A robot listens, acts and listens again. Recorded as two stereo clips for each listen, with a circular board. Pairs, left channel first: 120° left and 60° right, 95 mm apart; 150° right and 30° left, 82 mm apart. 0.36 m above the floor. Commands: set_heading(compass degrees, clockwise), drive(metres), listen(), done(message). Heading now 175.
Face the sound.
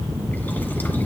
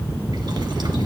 listen()
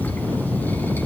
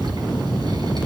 listen()
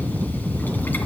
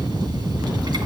done("I can't make out anything to turn to.")